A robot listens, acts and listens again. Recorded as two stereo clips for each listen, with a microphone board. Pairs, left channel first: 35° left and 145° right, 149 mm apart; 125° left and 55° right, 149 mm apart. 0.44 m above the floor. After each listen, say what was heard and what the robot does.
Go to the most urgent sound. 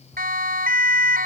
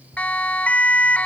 The siren: 155° right. Turn 155° right.
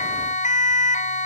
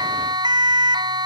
Drive 1.0 m forward.
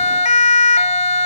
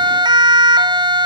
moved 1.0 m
Drive 1.0 m forward.
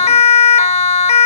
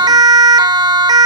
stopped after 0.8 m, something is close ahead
Arrived at the siren, straight ahead.